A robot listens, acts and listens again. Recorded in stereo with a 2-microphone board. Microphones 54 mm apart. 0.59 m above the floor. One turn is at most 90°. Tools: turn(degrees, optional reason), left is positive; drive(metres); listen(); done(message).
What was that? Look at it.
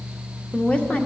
turn(degrees=25, reason="The woman speaking: about 25° left or 155° left.")
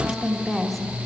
done("Found it: a woman speaking, straight ahead, 1 to 2 m away.")